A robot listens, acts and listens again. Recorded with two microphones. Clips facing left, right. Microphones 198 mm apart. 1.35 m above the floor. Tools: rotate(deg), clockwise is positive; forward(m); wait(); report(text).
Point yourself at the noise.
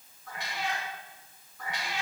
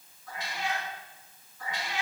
rotate(-70)
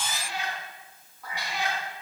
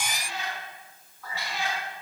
rotate(-15)
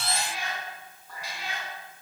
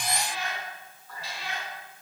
rotate(-15)
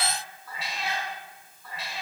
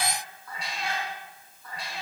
report("Facing the cat meowing.")